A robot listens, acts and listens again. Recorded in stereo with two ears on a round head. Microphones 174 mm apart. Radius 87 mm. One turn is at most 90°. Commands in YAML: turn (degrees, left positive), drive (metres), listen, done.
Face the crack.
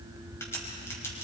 turn: 30
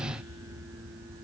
listen: true
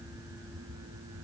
done: "I heard a crack, but can't make it out now. It was about 15° right or 135° left."